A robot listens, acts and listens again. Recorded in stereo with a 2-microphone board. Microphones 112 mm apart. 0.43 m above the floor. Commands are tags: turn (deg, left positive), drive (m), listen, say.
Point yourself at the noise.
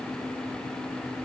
<listen/>
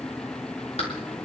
<listen/>
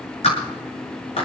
<turn deg="75"/>
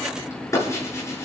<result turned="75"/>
<turn deg="25"/>
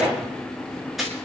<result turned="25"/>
<say>Found it: a clap, straight ahead.</say>